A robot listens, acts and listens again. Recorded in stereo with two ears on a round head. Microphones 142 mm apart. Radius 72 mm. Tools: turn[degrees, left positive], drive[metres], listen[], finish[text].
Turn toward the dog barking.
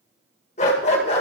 Thought: The dog barking: about 40° left or 140° left.
Action: turn[40]
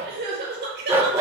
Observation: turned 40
Thought: So it is at 20° right.
Action: turn[-20]
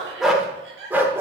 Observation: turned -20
Thought: The dog barking is now 15° right.
Action: turn[-15]
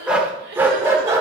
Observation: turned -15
Thought: The dog barking is now 20° right.
Action: turn[-20]
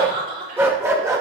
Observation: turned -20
Thought: The dog barking is now 20° right.
Action: turn[-20]
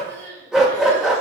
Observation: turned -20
Action: finish[Facing the dog barking, 1 to 2 m away.]